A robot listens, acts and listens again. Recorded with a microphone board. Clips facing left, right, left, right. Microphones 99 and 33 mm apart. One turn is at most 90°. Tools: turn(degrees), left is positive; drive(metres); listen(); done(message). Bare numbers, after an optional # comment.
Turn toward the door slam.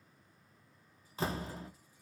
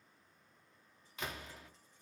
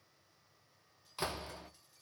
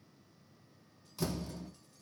# The door slam: about 35° left or 145° left.
turn(35)
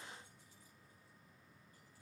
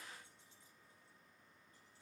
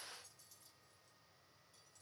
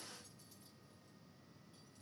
listen()
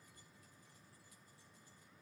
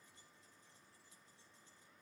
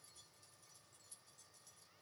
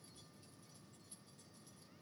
done("I heard a door slam, but can't make it out now. It was about straight ahead or 110° left.")